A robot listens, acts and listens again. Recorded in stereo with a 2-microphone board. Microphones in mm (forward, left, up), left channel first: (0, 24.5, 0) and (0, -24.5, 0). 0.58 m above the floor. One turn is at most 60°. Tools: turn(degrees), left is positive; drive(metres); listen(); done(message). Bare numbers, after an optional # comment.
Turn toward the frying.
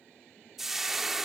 turn(-30)
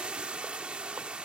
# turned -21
# So it is at 150° right.
turn(-60)
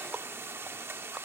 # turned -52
# The frying is now 100° right.
turn(-60)
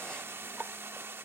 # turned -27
# The frying is now 75° right.
turn(-60)
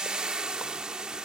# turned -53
# The frying is now 20° right.
turn(-20)
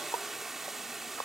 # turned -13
done("Facing the frying.")